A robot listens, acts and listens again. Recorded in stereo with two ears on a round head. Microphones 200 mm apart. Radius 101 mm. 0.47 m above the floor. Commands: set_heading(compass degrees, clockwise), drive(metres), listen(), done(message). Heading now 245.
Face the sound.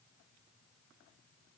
listen()
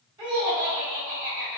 set_heading(265)
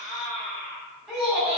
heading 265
done("Found it: laughter, straight ahead.")